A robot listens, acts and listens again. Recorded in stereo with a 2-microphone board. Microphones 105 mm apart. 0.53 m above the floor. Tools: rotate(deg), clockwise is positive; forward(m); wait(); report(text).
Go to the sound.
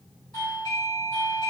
rotate(-45)
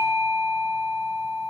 rotate(-85)
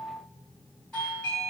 rotate(-10)
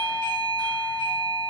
forward(1.0)
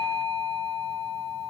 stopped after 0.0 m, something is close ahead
report("Blocked. The doorbell is further on, straight ahead.")